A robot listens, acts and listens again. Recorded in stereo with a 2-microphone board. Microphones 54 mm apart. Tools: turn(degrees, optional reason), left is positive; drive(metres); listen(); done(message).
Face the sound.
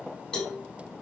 turn(degrees=30)
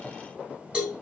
turn(degrees=-15, reason="So it is at 15° right.")
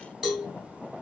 done("Facing the cowbell, 1 to 2 m away.")